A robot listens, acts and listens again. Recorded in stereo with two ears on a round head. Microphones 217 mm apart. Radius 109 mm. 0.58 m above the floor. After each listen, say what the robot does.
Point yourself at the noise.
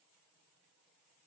Keep listening.
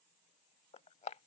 Turn 30° left.
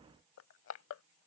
Turn 120° left.
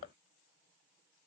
Turn 40° left.
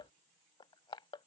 Turn 20° left.
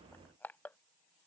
Turn 10° left.
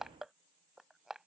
Found it: crushing, straight ahead.